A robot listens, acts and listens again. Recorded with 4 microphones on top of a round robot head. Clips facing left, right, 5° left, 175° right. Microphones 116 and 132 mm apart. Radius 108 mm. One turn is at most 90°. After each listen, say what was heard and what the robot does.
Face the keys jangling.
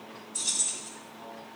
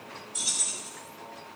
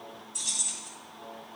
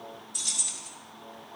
The keys jangling: 155° right. Turn 90° right.
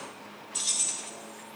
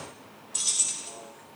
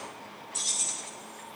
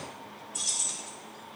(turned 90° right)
The keys jangling is now 35° right. Turn 35° right.
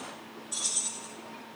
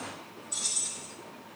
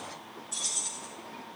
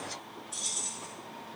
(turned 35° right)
The keys jangling is now 10° left. Turn 10° left.
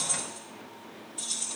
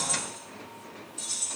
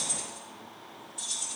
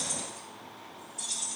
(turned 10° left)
The keys jangling is now 10° left. Turn 10° left.
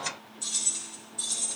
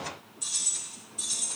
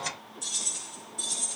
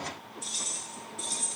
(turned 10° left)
Facing the keys jangling.